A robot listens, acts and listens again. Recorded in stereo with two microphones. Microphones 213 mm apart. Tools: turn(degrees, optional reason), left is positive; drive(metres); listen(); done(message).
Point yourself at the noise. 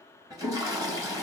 turn(degrees=-20, reason="The toilet flushing: about 20° right or 160° right.")
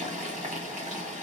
turn(degrees=-145, reason="So it is at 145° right.")
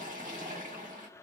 turn(degrees=-40, reason="The toilet flushing is now 40° right.")
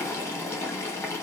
turn(degrees=10, reason="The toilet flushing is now 10° left.")
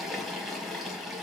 done("Facing the toilet flushing.")